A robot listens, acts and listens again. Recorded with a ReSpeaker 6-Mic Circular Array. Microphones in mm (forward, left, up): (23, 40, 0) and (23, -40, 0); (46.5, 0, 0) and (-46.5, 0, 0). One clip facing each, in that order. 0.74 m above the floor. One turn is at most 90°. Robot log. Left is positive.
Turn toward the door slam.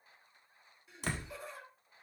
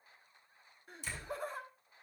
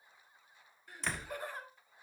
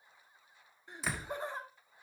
note: The door slam: 100° left.
cmd yaw +90
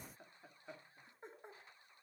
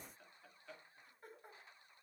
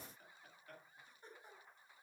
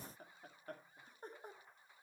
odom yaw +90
note: Nothing new. It was at 10° left.
cmd yaw +10
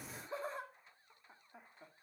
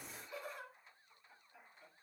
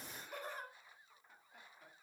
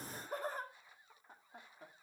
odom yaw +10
end: Facing where the door slam came from. I can't hear it now.